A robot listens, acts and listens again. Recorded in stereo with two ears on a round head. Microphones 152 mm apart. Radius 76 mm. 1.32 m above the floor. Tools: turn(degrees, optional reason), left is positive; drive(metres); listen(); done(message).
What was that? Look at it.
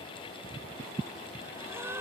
turn(degrees=-30)
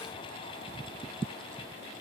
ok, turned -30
listen()
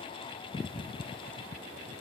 done("I heard a gasp, but can't make it out now. It was about 15° left or 135° right.")